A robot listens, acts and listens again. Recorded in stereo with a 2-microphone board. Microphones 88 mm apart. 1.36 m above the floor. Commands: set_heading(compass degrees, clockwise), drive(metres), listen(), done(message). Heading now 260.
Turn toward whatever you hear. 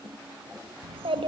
set_heading(350)
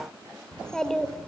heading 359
done("Facing the child speaking.")